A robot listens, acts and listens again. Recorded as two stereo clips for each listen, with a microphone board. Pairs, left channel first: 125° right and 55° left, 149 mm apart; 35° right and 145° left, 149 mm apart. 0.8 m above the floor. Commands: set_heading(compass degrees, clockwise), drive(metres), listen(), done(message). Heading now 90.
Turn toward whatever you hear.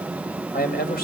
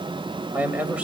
set_heading(225)
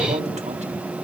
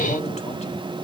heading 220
listen()
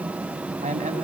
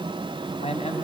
set_heading(205)
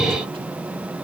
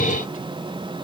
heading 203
listen()
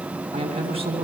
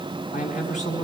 done("Facing the man speaking, over 4 m away.")